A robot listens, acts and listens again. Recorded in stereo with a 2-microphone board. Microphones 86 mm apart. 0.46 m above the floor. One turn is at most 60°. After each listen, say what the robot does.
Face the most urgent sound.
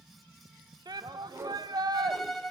Turn 55° right.
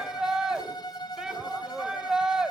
Turn 10° right.
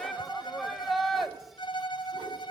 Facing the shout, 1 to 2 m away.